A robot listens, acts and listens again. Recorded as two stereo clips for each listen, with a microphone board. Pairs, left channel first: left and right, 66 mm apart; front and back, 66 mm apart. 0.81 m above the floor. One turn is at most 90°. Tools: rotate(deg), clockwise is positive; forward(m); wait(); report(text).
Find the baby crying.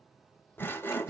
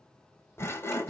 wait()
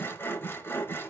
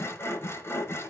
wait()
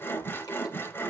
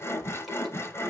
report("I can't make out a baby crying, only sawing.")